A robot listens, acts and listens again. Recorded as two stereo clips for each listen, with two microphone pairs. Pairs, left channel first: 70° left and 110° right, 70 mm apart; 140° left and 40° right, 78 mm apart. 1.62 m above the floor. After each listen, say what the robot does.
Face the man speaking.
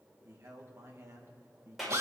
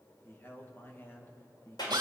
Turn 160° right.
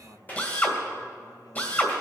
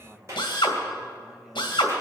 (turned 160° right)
Turn 45° left.
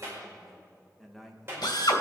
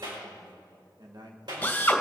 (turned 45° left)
Turn 20° right.
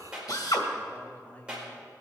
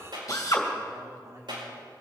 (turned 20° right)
Facing the man speaking.